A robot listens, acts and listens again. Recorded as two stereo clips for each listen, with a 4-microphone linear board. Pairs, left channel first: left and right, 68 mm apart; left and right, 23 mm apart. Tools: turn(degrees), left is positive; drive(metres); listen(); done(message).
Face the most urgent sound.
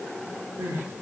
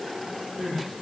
turn(degrees=-40)
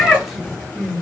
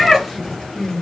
done("Found it: crying, straight ahead, under 1 m away.")